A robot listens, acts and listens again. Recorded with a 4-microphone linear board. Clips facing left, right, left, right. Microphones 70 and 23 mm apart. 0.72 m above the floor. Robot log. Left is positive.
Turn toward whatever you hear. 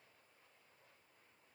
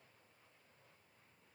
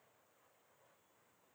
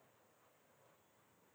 cmd idle
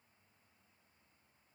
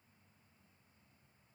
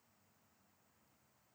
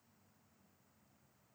cmd idle
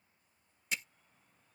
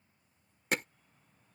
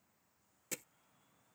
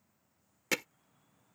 note: The hammering: about 60° right or 120° right.
cmd yaw -60
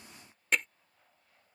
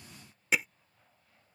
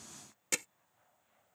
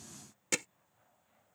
note: So it is at 10° right.
cmd yaw -10
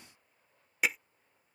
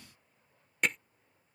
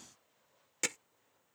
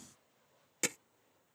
end: Facing the hammering.